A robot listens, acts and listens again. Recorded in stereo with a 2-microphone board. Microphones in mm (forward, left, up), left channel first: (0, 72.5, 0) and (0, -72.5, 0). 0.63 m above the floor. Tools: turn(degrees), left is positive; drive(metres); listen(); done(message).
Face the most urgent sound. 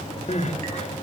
turn(degrees=50)
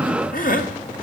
turn(degrees=75)
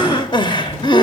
turn(degrees=35)
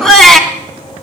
done("Found it: crying, straight ahead.")